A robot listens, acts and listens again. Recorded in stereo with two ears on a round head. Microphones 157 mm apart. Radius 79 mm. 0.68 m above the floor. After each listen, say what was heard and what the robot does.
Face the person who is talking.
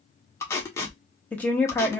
Turn 30° left.
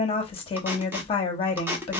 So it is at 140° left. Turn 140° left.
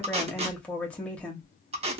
The woman speaking is now 10° left. Turn 10° left.
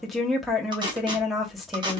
Found it: a woman speaking, straight ahead.